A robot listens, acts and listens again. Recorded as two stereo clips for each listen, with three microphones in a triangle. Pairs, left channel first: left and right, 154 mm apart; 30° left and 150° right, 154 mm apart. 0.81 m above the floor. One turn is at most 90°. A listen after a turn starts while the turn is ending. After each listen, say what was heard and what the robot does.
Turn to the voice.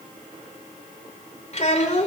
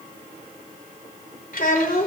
The child speaking: 50° left. Turn 50° left.
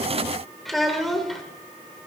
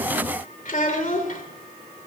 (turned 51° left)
Found it: a child speaking, straight ahead, 2 to 4 m away.